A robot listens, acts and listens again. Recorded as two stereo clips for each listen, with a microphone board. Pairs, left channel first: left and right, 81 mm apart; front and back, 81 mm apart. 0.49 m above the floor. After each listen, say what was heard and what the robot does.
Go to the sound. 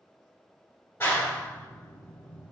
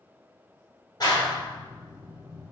The clap: 30° left. Turn 30° left.
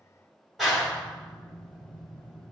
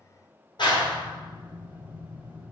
Drive 1.0 m forward.
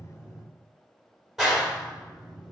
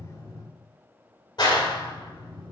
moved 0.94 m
Drive 1.0 m forward.
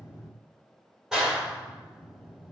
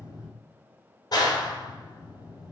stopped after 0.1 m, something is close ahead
The clap is now 10° right. Turn 10° right.
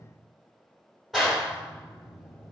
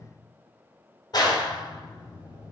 Arrived at the clap, straight ahead.